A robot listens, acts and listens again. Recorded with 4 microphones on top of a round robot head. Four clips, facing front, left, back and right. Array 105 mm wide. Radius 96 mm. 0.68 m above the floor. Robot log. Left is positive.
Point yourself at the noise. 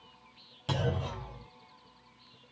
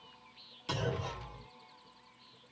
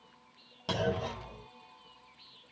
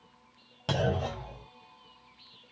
note: The clunk: 105° right.
cmd yaw -105
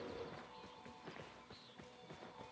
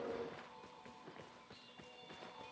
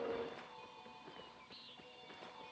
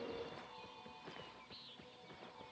end: I heard a clunk from this way, but can't make it out now.